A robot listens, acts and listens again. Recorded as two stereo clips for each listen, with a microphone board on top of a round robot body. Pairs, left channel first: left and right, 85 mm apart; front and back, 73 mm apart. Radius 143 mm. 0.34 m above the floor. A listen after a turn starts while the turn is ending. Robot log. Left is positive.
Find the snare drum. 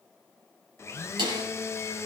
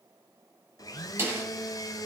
note: The snare drum: 120° right.
cmd yaw -120
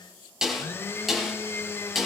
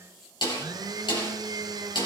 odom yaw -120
end: Facing the snare drum, over 4 m away.